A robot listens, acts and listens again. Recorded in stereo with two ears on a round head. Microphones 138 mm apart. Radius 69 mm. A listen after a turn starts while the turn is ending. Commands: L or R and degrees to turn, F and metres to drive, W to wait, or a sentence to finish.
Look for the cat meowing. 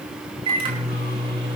W
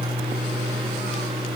W
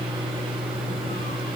I can't make out a cat meowing to turn to.